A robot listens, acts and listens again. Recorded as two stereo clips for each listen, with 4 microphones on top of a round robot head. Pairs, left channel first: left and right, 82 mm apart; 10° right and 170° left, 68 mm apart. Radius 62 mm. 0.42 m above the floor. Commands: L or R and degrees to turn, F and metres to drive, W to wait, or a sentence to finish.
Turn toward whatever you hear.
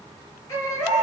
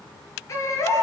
L30
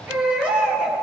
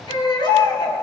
R15
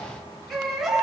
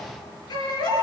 Found it: a baby crying, straight ahead.